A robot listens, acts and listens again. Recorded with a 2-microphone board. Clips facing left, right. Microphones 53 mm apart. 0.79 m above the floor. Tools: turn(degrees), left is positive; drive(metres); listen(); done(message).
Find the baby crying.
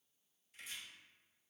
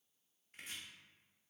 listen()
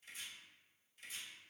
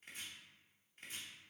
listen()
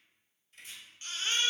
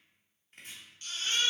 turn(degrees=30)
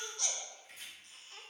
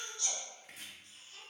turn(degrees=120)
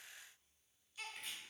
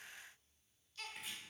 turn(degrees=15)
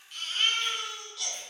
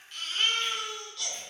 done("Facing the baby crying, under 1 m away.")